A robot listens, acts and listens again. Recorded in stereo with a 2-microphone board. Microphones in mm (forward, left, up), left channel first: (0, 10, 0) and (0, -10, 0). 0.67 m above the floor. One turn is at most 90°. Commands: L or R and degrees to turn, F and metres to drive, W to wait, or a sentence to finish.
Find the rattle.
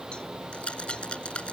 L65
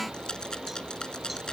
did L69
L45
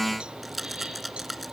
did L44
Found it: a rattle, straight ahead.